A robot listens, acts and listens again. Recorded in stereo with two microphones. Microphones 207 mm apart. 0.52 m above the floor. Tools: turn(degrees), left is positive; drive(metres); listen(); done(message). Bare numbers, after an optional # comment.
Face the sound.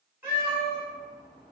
turn(-30)
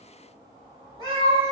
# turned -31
# So it is at 25° left.
turn(25)
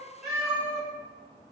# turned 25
done("Found it: a cat meowing, straight ahead, 1 to 2 m away.")